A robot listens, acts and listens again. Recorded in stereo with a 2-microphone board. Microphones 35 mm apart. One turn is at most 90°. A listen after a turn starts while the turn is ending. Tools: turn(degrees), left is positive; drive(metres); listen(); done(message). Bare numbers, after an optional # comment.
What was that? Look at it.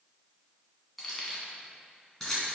turn(30)
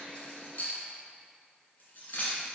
# So it is at 130° left.
turn(90)
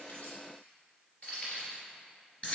# The keys jangling is now 40° left.
turn(40)
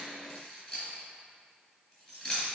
# The keys jangling is now 20° left.
turn(20)
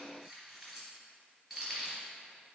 done("Facing the keys jangling.")